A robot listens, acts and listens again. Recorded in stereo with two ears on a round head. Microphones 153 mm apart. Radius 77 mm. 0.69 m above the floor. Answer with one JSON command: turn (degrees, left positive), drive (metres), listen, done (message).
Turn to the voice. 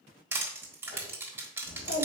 {"turn": 90}
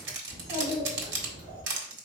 {"turn": -20}
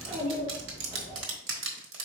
{"turn": -10}
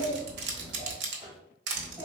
{"done": "Facing the child speaking, 2 to 4 m away."}